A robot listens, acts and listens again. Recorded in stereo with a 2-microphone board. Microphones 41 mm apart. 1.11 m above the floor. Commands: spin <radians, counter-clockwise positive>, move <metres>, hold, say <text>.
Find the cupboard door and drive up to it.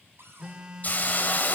spin -1.57
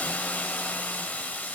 hold
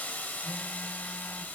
hold
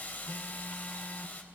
say I heard a cupboard door from this way, but can't make it out now. I did not reach it.